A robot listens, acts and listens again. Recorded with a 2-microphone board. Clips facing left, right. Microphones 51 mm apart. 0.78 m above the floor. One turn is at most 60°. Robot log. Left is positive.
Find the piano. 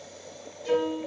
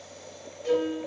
note: The piano: about 20° left or 160° left.
cmd yaw +20
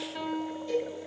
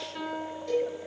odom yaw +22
end: Found it: a piano, straight ahead, 1 to 2 m away.